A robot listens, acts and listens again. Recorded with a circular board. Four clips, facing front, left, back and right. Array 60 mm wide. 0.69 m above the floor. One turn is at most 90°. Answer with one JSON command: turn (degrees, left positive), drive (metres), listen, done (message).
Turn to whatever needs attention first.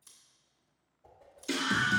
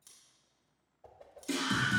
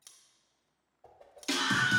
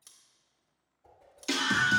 {"turn": -90}
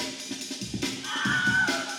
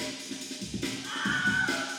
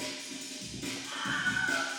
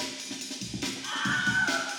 {"turn": -40}
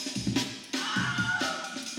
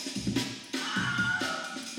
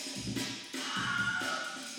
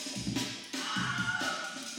{"done": "Found it: a scream, straight ahead, under 1 m away."}